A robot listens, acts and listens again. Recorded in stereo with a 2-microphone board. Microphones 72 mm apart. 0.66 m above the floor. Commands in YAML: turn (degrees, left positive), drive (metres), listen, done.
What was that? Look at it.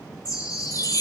turn: 55
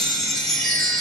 turn: 10
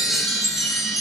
done: "Found it: a chime, straight ahead."